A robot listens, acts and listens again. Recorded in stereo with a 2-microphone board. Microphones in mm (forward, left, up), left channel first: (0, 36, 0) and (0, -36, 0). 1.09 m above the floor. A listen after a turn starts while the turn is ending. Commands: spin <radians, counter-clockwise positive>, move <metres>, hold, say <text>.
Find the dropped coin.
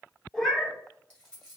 spin 0.52
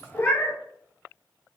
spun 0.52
hold
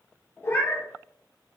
say I heard a dropped coin, but can't make it out now. It was about 20° right or 140° left.